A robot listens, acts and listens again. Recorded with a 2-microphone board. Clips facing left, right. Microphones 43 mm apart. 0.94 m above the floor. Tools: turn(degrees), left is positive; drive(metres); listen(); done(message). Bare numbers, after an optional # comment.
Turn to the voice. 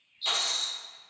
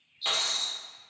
listen()
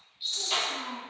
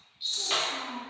# The child speaking: about 75° left or 105° left.
turn(75)
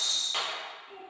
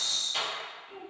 # So it is at 35° left.
turn(35)
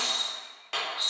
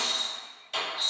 listen()
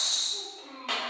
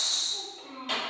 done("Facing the child speaking, 1 to 2 m away.")